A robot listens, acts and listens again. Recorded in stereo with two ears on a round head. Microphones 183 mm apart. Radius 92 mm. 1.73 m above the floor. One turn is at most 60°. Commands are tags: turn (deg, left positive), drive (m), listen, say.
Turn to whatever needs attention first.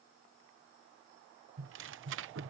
<listen/>
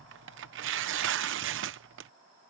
<listen/>
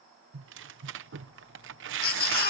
<turn deg="45"/>
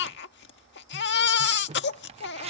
<turn deg="60"/>
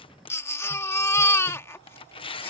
<turn deg="15"/>
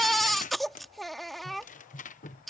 <say>Facing the baby crying.</say>